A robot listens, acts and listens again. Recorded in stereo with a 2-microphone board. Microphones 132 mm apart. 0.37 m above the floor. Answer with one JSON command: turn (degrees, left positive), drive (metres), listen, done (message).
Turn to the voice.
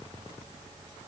{"listen": true}
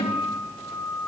{"listen": true}
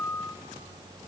{"done": "I can't make out anyone speaking to turn to."}